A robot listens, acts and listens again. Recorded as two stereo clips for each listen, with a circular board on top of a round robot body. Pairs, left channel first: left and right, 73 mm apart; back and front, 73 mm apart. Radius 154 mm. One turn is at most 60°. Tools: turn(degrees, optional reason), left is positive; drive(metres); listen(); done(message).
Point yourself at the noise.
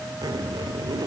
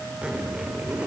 turn(degrees=-60, reason="The zipper: 75° right.")
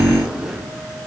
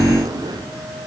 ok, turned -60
turn(degrees=-10, reason="The zipper is now 10° right.")
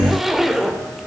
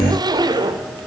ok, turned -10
done("Found it: a zipper, straight ahead, 2 to 4 m away.")